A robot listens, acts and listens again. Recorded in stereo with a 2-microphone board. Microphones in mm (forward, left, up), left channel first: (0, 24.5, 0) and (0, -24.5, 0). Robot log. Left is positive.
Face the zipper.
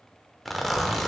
cmd yaw +30
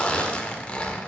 note: So it is at 150° left.
cmd yaw +150
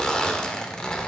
note: The zipper is now 25° left.
cmd yaw +25
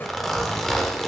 note: The zipper is now 10° left.
cmd yaw +10
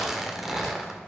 end: Facing the zipper, 1 to 2 m away.